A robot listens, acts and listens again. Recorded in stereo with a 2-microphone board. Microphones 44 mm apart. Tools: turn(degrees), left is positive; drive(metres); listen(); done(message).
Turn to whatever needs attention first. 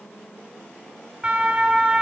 turn(degrees=-20)
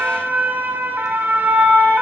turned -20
turn(degrees=-135)
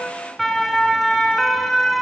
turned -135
done("Found it: a siren, straight ahead, 2 to 4 m away.")